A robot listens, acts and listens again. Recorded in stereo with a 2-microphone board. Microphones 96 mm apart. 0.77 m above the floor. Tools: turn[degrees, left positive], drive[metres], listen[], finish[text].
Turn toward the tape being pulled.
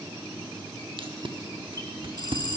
Thought: The tape being pulled: about 60° right or 120° right.
Action: turn[-60]
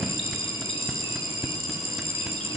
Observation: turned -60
Action: finish[Facing the tape being pulled.]